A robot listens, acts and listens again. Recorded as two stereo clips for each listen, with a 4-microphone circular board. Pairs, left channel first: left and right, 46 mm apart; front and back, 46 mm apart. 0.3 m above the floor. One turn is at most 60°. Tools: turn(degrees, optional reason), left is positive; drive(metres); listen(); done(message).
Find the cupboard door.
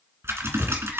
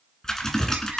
turn(degrees=-10, reason="The cupboard door: 10° right.")
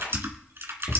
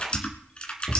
done("Found it: a cupboard door, straight ahead, 2 to 4 m away.")